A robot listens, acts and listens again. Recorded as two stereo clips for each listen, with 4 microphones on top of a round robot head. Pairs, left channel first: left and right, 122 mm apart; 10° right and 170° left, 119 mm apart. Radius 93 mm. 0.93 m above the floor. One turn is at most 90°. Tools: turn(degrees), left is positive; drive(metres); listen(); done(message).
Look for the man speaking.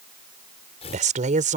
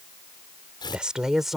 turn(degrees=-90)
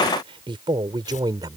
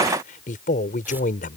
turn(degrees=-25)
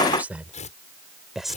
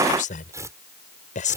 done("Found it: a man speaking, straight ahead.")